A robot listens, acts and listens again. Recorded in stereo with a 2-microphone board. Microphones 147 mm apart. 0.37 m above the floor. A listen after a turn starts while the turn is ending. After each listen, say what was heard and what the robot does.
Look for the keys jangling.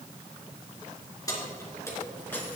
Turn 30° left.
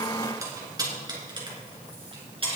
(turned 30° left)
So it is at 40° right. Turn 40° right.
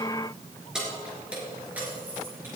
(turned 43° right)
The keys jangling is now 15° right. Turn 15° right.
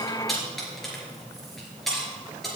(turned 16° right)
Facing the keys jangling.